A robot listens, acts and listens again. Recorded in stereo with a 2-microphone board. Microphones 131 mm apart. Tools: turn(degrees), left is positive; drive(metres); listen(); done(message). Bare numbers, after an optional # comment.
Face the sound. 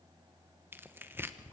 # The tearing paper: about 15° right or 165° right.
turn(-15)
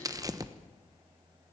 # So it is at 150° right.
turn(-150)
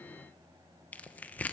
# The tearing paper is now 15° left.
turn(15)
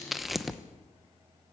done("Facing the tearing paper, 1 to 2 m away.")